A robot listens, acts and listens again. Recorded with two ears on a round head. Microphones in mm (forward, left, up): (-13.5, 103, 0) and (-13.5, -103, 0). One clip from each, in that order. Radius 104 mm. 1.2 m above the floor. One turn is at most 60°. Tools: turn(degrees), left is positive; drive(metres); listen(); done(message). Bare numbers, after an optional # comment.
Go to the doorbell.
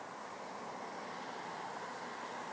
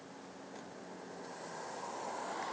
listen()
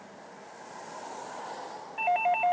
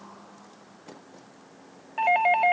# The doorbell: about 45° right or 135° right.
turn(-45)
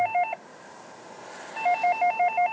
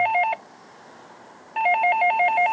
# So it is at 95° right.
turn(-60)
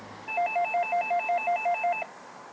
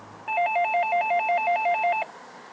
# The doorbell is now 35° right.
turn(-35)
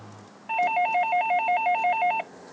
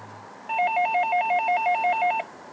drive(1.0)
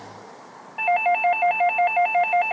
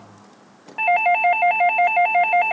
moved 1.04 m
# The doorbell is now 10° right.
turn(-10)
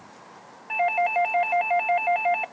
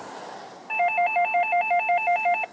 drive(1.0)
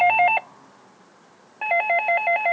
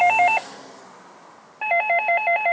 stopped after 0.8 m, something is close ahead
done("Arrived at the doorbell, straight ahead.")